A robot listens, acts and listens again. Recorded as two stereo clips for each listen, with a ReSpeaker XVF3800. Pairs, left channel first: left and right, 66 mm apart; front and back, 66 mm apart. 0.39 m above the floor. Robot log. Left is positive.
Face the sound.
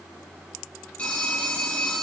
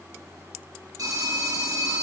note: The phone ringing: 160° left.
cmd yaw +160
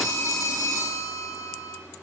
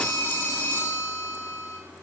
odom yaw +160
note: The phone ringing is now 45° left.
cmd yaw +45
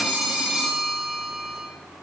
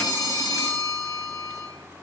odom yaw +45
note: The phone ringing is now 10° right.
cmd yaw -10
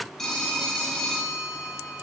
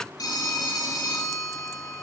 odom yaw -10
end: Found it: a phone ringing, straight ahead.